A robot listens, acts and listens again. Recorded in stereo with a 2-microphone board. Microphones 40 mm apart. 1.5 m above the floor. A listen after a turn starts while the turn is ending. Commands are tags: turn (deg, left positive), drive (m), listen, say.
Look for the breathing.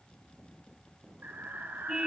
<turn deg="-70"/>
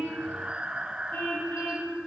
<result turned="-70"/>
<turn deg="-30"/>
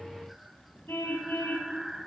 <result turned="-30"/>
<say>Found it: breathing, straight ahead.</say>